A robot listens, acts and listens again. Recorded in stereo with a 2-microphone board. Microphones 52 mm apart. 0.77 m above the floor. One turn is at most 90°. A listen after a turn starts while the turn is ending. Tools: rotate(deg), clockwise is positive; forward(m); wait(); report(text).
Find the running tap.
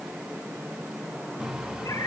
rotate(15)
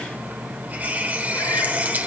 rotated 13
rotate(90)
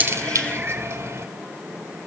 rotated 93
rotate(55)
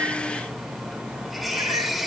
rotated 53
report("Found it: a running tap, straight ahead.")